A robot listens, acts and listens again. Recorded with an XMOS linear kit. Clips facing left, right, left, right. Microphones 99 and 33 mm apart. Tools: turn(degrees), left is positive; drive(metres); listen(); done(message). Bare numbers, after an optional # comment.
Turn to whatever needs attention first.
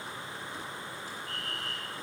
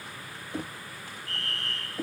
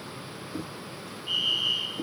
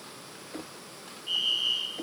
turn(30)
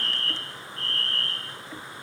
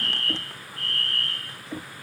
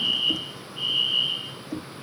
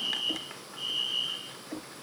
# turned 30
# So it is at 145° left.
turn(145)
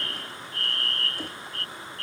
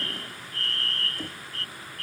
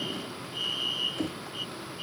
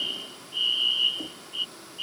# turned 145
# The fire alarm is now 35° right.
turn(-35)
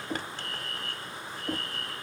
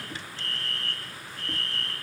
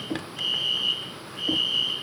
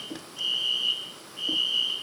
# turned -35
done("Found it: a fire alarm, straight ahead.")